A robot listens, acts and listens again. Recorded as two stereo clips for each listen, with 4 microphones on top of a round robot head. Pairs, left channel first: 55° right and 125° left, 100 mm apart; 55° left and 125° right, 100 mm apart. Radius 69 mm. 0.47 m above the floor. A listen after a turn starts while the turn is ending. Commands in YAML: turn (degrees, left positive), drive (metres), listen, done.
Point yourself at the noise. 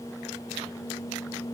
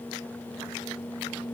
listen: true
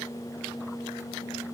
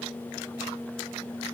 listen: true
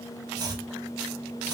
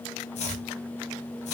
turn: 70
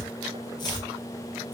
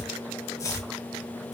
done: "Facing the chopping, under 1 m away."